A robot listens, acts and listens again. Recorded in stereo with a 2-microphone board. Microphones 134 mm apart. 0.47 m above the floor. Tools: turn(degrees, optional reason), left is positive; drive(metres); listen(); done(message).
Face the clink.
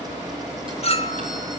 turn(degrees=50, reason="The clink: about 50° left or 130° left.")
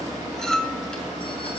done("Found it: a clink, straight ahead.")